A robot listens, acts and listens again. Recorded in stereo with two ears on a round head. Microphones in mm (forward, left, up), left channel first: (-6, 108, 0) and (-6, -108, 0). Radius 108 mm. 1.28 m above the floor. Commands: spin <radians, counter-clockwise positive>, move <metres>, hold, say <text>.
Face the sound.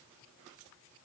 hold
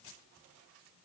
hold
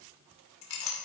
spin 1.13
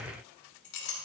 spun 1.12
spin 0.87
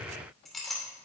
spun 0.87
say Facing the clink, 2 to 4 m away.